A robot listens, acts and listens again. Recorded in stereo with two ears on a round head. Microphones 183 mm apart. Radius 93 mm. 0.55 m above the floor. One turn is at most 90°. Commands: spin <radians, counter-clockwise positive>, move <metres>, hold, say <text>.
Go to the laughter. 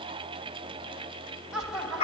spin -0.52
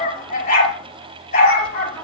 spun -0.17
spin 0.52
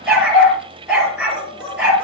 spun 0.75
hold
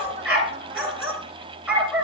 hold
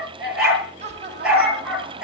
spin -0.61
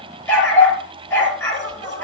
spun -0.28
spin -0.35
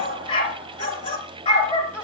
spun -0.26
move 1.0
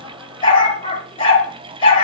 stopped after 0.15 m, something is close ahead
hold
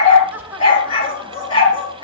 spin -0.17
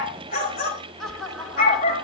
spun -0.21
say Something is in my way. I am facing the laughter but have not reached it.